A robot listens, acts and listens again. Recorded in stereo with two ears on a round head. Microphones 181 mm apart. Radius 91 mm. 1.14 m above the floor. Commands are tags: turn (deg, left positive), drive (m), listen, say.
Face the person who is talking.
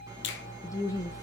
<turn deg="15"/>
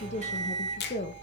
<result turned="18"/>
<turn deg="145"/>
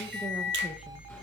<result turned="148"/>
<listen/>
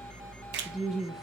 <say>Found it: a woman speaking, straight ahead.</say>